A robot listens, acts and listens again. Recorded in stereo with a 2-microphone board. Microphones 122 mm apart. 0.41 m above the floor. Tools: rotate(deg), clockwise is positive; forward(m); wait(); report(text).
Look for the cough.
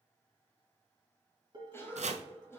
rotate(-20)
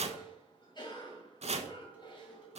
rotate(-135)
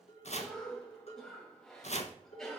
report("Found it: a cough, straight ahead.")